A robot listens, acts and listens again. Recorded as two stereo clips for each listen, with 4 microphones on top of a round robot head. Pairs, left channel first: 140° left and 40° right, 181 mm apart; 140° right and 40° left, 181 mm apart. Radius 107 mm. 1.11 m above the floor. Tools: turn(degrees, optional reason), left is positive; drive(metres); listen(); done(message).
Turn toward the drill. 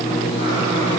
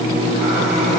listen()
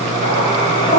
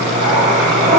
listen()
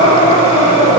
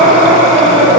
done("I can't make out a drill to turn to.")